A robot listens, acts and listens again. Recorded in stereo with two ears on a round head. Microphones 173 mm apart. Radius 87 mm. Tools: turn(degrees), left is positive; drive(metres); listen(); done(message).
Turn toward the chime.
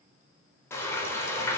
listen()
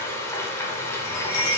turn(degrees=60)
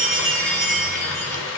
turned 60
done("Facing the chime, 1 to 2 m away.")